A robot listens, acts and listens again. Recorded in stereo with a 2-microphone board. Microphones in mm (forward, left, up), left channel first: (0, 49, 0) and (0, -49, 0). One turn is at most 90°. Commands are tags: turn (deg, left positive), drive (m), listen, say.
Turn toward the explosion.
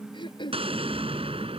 <turn deg="-90"/>
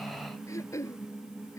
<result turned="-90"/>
<say>I heard an explosion from this way, but can't make it out now.</say>